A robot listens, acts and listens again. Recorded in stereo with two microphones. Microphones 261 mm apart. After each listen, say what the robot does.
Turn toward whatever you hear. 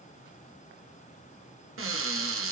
Turn 55° right.
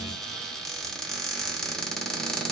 Found it: a cupboard door, straight ahead, under 1 m away.